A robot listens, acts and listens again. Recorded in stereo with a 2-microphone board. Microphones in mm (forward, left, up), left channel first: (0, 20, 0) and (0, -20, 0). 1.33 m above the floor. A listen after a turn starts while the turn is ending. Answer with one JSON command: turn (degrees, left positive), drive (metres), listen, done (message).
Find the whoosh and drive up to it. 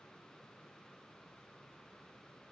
{"listen": true}
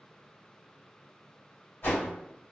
{"turn": 60}
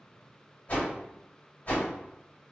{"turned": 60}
{"turn": 50}
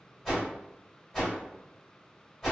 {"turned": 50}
{"turn": 10}
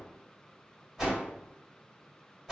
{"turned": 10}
{"drive": 1.0}
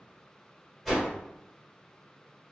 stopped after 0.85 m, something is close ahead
{"done": "I am next to the whoosh."}